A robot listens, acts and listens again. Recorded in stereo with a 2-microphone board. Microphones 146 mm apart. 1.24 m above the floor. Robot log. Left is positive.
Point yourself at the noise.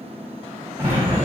cmd yaw -30
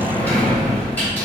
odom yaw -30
note: So it is at 15° left.
cmd yaw +15
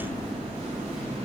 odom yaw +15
end: Found it: a sliding door, straight ahead.